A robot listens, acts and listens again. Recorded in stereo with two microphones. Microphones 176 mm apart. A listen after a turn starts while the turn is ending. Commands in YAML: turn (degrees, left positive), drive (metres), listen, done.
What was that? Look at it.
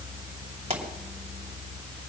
turn: -35
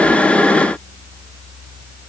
listen: true
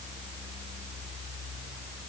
done: "I heard a pop, but can't make it out now. It was about straight ahead or 110° right."